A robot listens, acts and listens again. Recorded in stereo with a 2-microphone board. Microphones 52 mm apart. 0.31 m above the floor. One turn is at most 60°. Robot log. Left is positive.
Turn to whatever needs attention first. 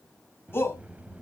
note: The shout: about 45° left or 135° left.
cmd yaw +45
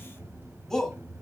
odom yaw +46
note: So it is at 10° left.
cmd yaw +10
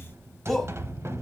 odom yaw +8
end: Found it: a shout, straight ahead.